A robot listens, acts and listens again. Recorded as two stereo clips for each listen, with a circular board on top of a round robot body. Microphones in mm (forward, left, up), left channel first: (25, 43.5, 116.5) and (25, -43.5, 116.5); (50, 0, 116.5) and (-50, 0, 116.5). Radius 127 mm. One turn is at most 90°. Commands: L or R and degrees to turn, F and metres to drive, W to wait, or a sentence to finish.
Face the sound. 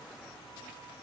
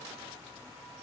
W
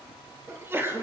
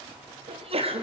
R90
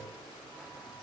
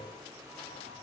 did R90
R65
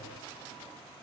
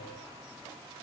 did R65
I heard a sneeze from this way, but can't make it out now.